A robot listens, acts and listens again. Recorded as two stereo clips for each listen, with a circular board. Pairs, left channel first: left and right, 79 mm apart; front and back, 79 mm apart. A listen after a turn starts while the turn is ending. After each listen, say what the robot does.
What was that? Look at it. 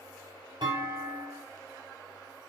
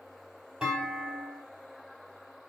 Turn 100° right.
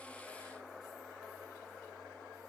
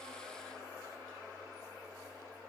I heard a clunk from this way, but can't make it out now.